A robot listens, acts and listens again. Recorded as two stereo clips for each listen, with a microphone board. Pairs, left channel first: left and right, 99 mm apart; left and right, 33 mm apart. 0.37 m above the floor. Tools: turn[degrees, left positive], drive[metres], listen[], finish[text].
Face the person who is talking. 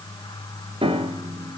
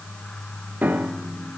Action: listen[]
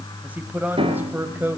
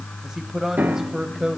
Thought: The man speaking: about 20° right or 160° right.
Action: turn[-20]
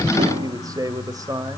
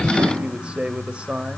Thought: The man speaking: about 35° right or 145° right.
Action: turn[-35]
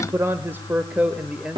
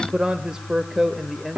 Thought: So it is at 10° right.
Action: turn[-10]
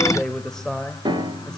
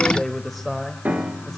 Action: finish[Found it: a man speaking, straight ahead.]